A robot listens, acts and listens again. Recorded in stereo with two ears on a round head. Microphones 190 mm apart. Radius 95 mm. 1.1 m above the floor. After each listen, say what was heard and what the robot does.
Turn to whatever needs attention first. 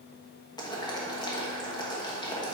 Keep listening.
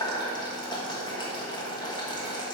Keep listening.
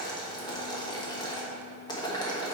I can't make out anything urgent to turn to.